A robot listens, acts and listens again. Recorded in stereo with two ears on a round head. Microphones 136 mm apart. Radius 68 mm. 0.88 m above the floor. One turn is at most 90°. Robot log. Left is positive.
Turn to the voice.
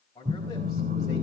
note: The man speaking: about 25° left or 155° left.
cmd yaw +25
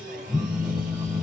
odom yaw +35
cmd idle
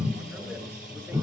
cmd idle
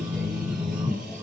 end: I heard a man speaking, but can't make it out now. It was about 10° right or 120° left.